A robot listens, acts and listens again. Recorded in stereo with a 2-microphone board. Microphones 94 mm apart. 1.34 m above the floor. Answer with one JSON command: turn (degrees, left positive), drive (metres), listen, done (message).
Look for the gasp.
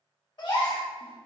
{"turn": 50}
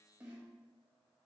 {"listen": true}
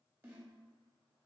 {"done": "I heard a gasp, but can't make it out now. It was about straight ahead or 80° left."}